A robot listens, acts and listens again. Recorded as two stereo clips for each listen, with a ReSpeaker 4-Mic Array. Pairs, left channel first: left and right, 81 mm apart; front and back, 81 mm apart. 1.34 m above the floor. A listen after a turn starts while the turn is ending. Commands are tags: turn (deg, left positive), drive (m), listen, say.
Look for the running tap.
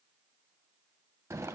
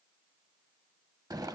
<listen/>
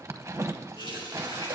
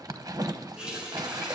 <turn deg="100"/>
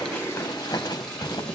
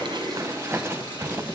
<listen/>
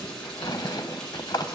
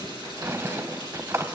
<say>Facing the running tap.</say>